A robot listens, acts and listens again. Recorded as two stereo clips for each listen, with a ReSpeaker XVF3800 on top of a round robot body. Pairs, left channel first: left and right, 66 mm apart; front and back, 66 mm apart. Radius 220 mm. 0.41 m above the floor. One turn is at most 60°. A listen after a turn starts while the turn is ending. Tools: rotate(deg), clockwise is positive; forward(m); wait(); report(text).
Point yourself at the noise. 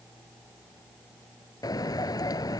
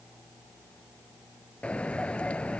rotate(-60)
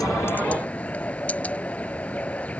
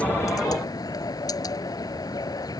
rotate(-20)
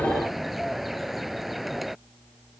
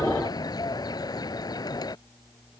report("Found it: a bird, straight ahead.")